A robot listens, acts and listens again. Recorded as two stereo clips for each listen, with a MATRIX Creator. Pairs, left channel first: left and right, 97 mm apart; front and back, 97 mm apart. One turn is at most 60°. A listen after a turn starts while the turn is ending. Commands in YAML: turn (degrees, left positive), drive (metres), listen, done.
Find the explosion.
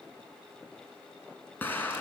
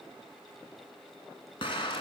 turn: 20
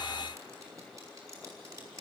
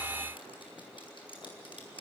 done: "I heard an explosion from this way, but can't make it out now."